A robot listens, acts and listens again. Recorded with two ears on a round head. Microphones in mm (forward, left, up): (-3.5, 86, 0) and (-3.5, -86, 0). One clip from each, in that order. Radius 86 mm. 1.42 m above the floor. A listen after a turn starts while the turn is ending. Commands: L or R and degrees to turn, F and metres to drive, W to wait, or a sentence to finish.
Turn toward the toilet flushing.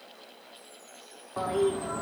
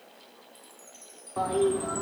L30
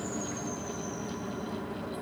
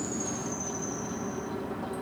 R20
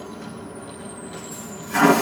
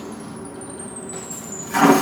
Facing the toilet flushing.